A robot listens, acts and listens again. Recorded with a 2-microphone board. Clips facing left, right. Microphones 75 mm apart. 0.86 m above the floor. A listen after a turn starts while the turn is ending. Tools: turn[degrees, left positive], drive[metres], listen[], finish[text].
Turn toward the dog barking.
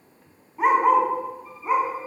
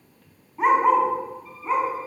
Action: turn[30]
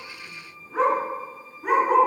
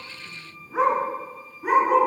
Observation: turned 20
Action: turn[30]
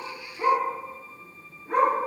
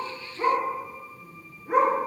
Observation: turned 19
Thought: So it is at 15° right.
Action: turn[-15]
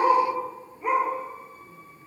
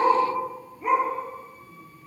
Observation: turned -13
Action: finish[Found it: a dog barking, straight ahead.]